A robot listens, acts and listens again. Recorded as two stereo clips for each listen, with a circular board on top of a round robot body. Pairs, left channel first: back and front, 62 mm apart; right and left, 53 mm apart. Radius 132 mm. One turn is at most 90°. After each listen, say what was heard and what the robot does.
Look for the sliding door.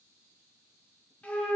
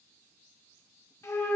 Keep listening.
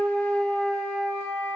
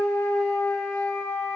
Keep listening.
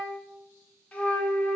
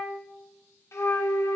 I can't make out a sliding door, only a flute.